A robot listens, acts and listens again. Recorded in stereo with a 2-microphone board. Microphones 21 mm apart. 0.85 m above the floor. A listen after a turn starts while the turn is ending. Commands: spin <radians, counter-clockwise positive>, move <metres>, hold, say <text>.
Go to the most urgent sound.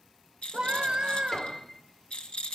spin -0.70
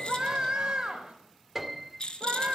spin -1.75
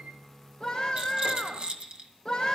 spin 0.26
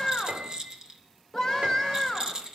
move 1.0
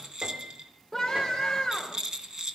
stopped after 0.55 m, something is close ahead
say Blocked. The scream is further on, straight ahead.